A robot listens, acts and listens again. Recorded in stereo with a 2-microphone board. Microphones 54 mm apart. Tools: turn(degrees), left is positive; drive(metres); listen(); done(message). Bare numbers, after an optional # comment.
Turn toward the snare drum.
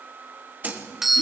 # The snare drum: about 35° right or 145° right.
turn(-35)
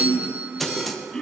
done("Found it: a snare drum, straight ahead.")